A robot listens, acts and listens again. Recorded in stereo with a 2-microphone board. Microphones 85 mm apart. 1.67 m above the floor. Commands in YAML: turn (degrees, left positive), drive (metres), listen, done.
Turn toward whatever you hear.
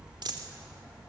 turn: -60
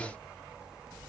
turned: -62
listen: true
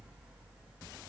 done: "I heard a dropped coin, but can't make it out now. It was about straight ahead or 55° right."